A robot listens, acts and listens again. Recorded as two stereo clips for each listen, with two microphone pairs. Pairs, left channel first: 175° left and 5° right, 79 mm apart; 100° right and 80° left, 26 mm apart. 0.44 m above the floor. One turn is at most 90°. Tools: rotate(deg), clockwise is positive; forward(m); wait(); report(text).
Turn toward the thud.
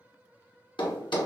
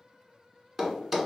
rotate(-90)
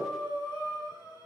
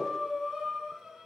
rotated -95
rotate(-75)
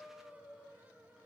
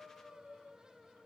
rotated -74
report("I heard a thud from this way, but can't make it out now.")